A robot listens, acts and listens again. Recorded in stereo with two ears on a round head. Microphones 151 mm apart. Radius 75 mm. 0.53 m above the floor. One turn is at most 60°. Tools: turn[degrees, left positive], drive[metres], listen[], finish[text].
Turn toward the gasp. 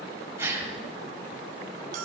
Action: turn[-30]
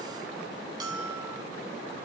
Action: listen[]
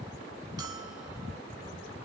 Action: finish[I heard a gasp, but can't make it out now. It was about 15° left or 135° right.]